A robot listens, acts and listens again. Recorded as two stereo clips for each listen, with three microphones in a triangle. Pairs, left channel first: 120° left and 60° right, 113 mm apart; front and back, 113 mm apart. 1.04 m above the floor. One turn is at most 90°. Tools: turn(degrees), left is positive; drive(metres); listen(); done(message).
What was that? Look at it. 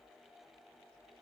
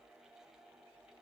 listen()
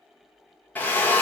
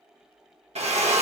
turn(degrees=-90)
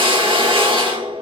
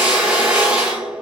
turn(degrees=-90)
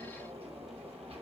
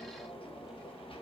turn(degrees=-10)
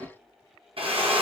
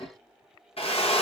turn(degrees=-30)
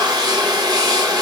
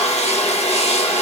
done("Facing the drill.")